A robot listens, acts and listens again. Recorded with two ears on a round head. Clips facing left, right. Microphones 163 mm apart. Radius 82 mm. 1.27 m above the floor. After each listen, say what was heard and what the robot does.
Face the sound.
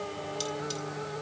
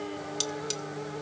The cutlery clinking: about 60° right or 120° right. Turn 60° right.
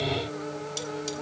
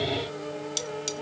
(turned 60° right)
So it is at 45° right. Turn 45° right.
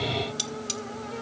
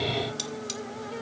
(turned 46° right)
Found it: cutlery clinking, straight ahead, 1 to 2 m away.